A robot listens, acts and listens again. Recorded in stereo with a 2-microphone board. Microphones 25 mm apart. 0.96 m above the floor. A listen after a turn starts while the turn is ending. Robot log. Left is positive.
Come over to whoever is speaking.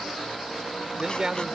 note: The man speaking: about 30° right or 150° right.
cmd yaw -30
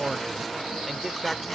cmd fwd 1.0
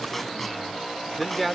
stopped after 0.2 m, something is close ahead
end: Blocked. The man speaking is further on, straight ahead.